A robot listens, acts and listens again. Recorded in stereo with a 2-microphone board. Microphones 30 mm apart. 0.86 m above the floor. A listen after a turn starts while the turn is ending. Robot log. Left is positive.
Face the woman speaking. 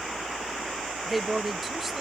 cmd yaw +30
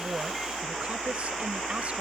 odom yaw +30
cmd idle
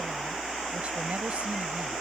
cmd idle
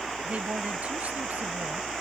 note: So it is at 55° right.
cmd yaw -55
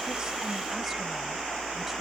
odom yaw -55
cmd idle
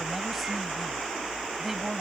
end: Found it: a woman speaking, straight ahead.